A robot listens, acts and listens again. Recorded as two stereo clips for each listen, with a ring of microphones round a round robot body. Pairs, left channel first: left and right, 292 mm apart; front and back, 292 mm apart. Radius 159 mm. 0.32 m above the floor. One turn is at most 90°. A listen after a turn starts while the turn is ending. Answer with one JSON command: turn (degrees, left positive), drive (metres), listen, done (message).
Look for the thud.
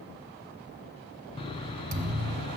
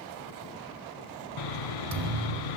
{"turn": -90}
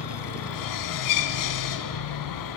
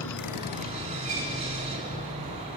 {"turn": -60}
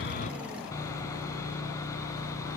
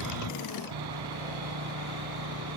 {"done": "I heard a thud from this way, but can't make it out now."}